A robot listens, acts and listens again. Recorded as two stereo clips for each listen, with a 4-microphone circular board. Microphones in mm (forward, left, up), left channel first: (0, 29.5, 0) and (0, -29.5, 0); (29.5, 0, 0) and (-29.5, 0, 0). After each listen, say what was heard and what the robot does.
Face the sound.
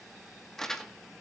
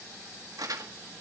The crumpling: 170° left. Turn 170° left.
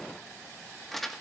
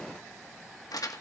Found it: crumpling, straight ahead.